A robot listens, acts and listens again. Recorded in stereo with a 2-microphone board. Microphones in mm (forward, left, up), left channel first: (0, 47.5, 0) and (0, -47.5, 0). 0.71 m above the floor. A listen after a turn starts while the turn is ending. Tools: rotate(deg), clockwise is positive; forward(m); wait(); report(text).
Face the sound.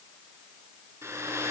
rotate(30)
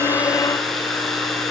report("Facing the hair dryer, over 4 m away.")